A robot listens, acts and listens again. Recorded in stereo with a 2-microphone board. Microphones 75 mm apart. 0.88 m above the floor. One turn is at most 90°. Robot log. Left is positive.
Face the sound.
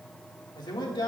note: The man speaking: about 70° left or 110° left.
cmd yaw +70
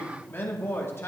note: So it is at 35° left.
cmd yaw +35
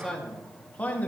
note: The man speaking is now 20° left.
cmd yaw +20
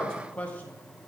note: The man speaking is now 20° left.
cmd yaw +20
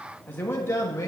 note: The man speaking is now 40° left.
cmd yaw +40
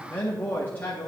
note: The man speaking is now 25° left.
cmd yaw +25
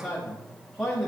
end: Found it: a man speaking, straight ahead, 1 to 2 m away.